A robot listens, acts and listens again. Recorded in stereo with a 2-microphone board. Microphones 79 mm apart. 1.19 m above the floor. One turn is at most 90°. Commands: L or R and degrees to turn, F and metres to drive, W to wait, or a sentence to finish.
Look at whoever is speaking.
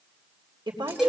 R90
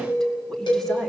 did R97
W
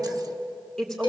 Facing the woman speaking, 2 to 4 m away.